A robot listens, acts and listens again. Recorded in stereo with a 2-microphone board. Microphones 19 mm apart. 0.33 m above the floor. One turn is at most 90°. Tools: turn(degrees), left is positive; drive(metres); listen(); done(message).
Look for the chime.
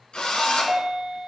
turn(degrees=-40)
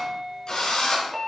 done("Facing the chime.")